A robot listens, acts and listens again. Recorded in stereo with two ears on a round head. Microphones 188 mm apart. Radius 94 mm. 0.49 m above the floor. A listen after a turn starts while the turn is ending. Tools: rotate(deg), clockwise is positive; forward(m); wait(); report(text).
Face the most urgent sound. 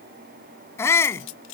rotate(-30)
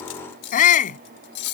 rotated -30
rotate(-140)
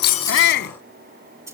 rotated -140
rotate(-55)
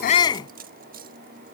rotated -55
rotate(-20)
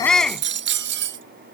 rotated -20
report("Found it: a shout, straight ahead.")